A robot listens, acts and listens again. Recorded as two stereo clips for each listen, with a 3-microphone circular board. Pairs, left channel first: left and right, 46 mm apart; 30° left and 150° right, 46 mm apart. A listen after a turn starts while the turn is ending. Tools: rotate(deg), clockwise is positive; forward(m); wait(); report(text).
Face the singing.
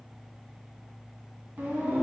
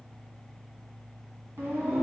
rotate(130)
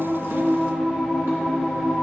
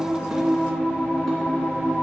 report("Facing the singing, 2 to 4 m away.")